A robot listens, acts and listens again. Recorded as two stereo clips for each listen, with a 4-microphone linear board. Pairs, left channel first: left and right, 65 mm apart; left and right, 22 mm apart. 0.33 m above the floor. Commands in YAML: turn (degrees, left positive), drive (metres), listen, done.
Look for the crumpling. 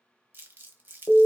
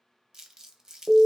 turn: -35
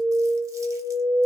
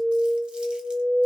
listen: true
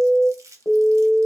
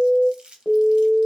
turn: -110
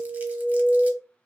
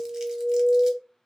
listen: true
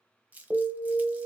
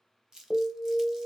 turn: -30
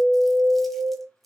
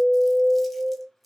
listen: true
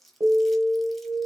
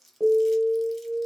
done: "Facing the crumpling."